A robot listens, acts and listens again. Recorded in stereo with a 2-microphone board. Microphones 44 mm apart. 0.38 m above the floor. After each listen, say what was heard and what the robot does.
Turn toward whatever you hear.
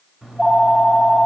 Turn 30° right.
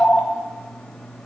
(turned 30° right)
So it is at 20° left. Turn 20° left.
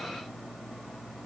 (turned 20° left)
Facing the phone ringing.